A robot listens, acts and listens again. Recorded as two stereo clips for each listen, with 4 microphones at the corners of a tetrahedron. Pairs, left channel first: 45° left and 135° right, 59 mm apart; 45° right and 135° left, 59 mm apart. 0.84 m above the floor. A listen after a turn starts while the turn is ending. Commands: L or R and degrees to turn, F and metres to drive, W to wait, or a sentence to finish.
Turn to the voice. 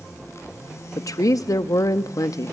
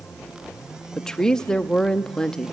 L35
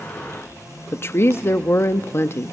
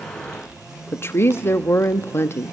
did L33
Found it: a woman speaking, straight ahead, under 1 m away.